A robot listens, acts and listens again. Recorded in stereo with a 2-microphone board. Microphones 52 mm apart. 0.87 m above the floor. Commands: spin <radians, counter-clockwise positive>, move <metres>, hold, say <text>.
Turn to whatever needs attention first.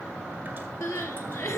spin 1.13
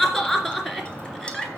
say Facing the crying.